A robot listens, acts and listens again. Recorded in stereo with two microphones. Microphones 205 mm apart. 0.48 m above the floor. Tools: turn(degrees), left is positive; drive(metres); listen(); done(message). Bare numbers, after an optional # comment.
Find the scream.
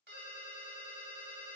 listen()
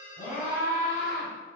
# The scream: about 50° left or 130° left.
turn(50)
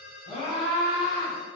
# So it is at 20° left.
turn(20)
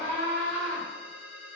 done("Found it: a scream, straight ahead.")